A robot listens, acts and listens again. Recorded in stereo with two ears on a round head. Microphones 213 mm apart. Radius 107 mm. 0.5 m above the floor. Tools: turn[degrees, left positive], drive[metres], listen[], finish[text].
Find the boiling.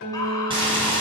Thought: The boiling: about 20° right or 160° right.
Action: turn[-20]
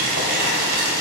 Thought: So it is at 135° right.
Action: turn[-135]
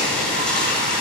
Action: finish[Facing the boiling.]